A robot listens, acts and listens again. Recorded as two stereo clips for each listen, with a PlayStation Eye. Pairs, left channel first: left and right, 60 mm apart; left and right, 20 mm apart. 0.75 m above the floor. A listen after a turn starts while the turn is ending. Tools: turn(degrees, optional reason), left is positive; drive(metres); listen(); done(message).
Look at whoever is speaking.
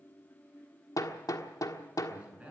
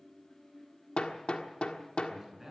turn(degrees=-20, reason="The man speaking: about 20° right or 160° right.")
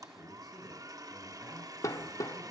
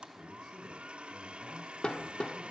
done("Found it: a man speaking, straight ahead.")